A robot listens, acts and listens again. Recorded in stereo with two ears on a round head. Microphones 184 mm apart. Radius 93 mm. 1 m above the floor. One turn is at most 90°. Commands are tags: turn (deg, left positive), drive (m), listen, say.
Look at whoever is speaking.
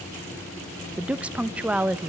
<turn deg="-30"/>
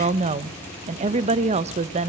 <turn deg="-90"/>
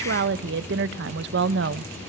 <turn deg="-70"/>
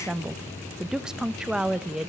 <say>Facing the woman speaking.</say>